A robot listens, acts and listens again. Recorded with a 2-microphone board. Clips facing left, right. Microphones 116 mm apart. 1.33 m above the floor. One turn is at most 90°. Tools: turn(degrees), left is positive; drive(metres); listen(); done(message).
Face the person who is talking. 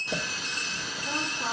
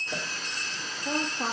turn(degrees=-50)
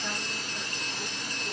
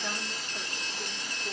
listen()
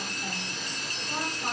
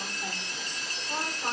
listen()
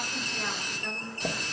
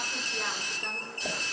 done("I heard a woman speaking, but can't make it out now. It was about straight ahead or 80° right.")